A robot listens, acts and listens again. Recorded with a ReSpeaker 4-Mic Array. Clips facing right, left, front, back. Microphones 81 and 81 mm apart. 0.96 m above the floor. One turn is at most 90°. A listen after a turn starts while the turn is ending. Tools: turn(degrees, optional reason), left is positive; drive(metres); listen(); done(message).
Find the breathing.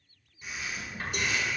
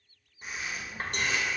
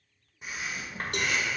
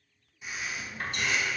turn(degrees=40, reason="The breathing: 40° left.")
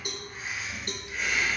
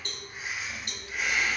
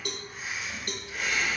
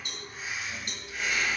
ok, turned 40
done("Found it: breathing, straight ahead.")